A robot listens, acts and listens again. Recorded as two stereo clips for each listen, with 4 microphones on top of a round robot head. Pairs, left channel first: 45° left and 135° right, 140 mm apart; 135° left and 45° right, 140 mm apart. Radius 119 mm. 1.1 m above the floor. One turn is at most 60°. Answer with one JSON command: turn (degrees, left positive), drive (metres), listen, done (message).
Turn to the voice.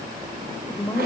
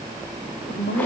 {"turn": 60}
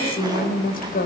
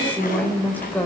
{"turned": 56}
{"turn": 60}
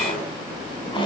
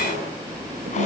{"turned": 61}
{"listen": true}
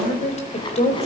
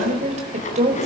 {"done": "Found it: a woman speaking, straight ahead, over 4 m away."}